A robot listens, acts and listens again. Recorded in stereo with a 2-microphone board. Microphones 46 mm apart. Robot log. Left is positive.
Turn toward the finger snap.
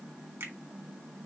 note: The finger snap: about 60° right or 120° right.
cmd yaw -60
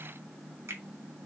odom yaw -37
note: So it is at 85° right.
cmd yaw -85
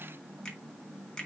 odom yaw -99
note: The finger snap is now 15° left.
cmd yaw +15
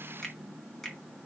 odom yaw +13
end: Found it: a finger snap, straight ahead, 2 to 4 m away.